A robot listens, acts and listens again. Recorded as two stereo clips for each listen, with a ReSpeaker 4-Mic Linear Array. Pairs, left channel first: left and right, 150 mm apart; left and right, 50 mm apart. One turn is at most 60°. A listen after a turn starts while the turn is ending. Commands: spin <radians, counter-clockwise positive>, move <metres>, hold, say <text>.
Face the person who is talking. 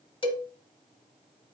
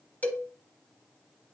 hold
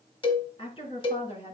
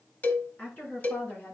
spin 0.70
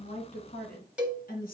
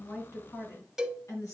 spin 1.05
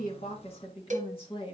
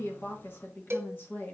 spin 0.61
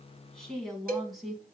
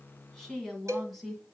say Facing the woman speaking, 2 to 4 m away.